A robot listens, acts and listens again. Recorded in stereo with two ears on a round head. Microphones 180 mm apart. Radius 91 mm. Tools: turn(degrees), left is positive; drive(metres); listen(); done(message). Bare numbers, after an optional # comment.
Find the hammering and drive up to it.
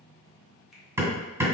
turn(-30)
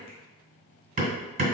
# So it is at 135° right.
turn(-135)
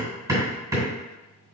# The hammering is now 15° right.
turn(-15)
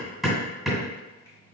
drive(1.0)
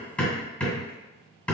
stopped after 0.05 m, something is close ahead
done("Blocked. The hammering is further on, straight ahead.")